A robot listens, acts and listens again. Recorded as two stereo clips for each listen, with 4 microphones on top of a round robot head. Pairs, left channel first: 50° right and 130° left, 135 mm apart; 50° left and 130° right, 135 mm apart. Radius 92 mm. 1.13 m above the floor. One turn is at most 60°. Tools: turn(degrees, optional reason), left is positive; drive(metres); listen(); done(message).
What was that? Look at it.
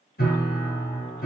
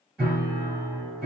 turn(degrees=-45, reason="The piano: 45° right.")
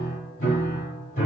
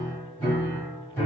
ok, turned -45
turn(degrees=-25, reason="The piano is now 25° right.")
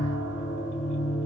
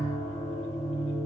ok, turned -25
turn(degrees=-10, reason="The piano is now 10° right.")
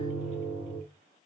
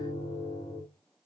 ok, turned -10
done("Facing the piano.")